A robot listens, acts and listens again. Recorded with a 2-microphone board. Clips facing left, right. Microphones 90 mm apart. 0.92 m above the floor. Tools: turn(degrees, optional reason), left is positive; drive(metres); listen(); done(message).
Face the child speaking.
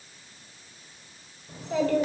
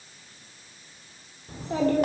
turn(degrees=-35, reason="The child speaking: about 35° right or 145° right.")
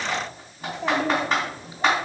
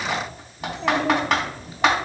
turn(degrees=20, reason="So it is at 20° left.")
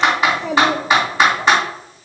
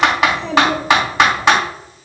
turn(degrees=15, reason="The child speaking is now 15° left.")
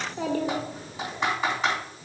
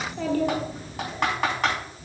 turn(degrees=20, reason="The child speaking is now 20° left.")
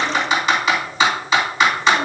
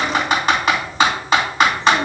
done("Found it: a child speaking, straight ahead.")